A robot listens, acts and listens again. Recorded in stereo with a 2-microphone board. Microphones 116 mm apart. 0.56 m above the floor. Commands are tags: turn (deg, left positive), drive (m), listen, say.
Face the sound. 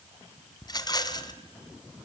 <turn deg="35"/>
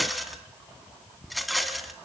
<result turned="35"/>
<say>Facing the rattle.</say>